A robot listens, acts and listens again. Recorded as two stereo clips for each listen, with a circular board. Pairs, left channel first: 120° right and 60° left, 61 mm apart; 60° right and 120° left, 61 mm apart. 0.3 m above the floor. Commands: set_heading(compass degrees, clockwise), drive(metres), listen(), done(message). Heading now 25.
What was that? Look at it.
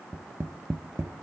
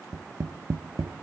set_heading(280)
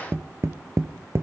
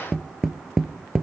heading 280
set_heading(250)
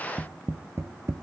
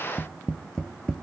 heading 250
set_heading(235)
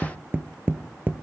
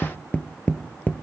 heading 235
done("Found it: tapping, straight ahead, under 1 m away.")